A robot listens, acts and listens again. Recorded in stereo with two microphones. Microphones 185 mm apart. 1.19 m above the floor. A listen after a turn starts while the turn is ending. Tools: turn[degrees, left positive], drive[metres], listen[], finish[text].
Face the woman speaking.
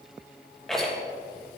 Action: listen[]
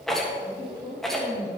Thought: The woman speaking: about 20° right or 160° right.
Action: turn[-20]
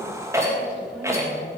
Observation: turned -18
Action: listen[]
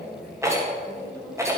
Action: finish[Found it: a woman speaking, straight ahead.]